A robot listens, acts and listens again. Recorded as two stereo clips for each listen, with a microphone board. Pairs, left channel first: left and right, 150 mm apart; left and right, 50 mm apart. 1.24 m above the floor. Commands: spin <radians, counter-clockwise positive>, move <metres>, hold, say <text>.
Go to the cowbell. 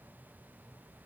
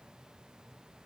hold
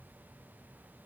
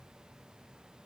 hold
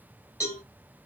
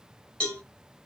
spin 0.35
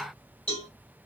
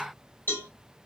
spin 2.44
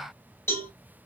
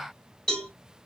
spin 0.26
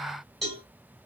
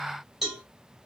move 1.0
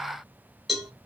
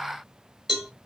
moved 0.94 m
move 1.0
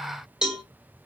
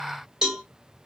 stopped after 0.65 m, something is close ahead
say Arrived at the cowbell, straight ahead.